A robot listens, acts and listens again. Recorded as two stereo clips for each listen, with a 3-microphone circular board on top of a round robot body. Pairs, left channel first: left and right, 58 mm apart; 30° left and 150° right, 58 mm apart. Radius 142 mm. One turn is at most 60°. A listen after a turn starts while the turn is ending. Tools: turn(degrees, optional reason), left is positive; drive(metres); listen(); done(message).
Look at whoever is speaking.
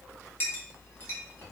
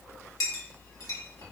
listen()
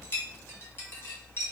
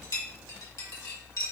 listen()
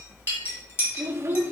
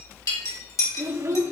turn(degrees=-60, reason="The child speaking: 130° right.")
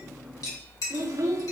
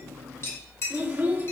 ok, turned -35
turn(degrees=-60, reason="The child speaking is now 95° right.")
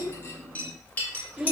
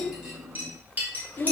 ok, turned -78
turn(degrees=-20, reason="The child speaking is now 20° right.")
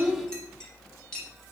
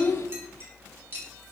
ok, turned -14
listen()
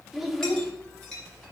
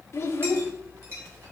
done("Facing the child speaking, 1 to 2 m away.")